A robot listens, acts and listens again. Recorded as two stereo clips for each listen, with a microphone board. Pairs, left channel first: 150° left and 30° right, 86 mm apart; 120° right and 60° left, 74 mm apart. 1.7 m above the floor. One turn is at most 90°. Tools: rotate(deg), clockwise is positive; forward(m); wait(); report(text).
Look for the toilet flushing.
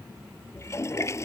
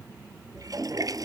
rotate(-90)
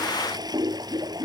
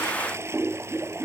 rotate(-10)
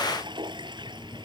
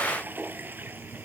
report("Found it: a toilet flushing, straight ahead.")